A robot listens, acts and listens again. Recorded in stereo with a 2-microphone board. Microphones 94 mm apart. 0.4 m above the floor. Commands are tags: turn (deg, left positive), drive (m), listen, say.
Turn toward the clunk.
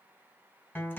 <listen/>
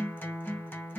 <listen/>
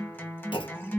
<turn deg="65"/>
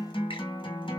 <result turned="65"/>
<listen/>
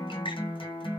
<say>I heard a clunk, but can't make it out now. It was about straight ahead or 50° left.</say>